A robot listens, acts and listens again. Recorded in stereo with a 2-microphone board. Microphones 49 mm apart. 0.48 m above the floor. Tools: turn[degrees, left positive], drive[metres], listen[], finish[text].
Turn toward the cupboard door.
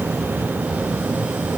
Action: listen[]
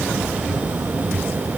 Action: listen[]
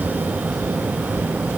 Action: finish[I can't make out a cupboard door.]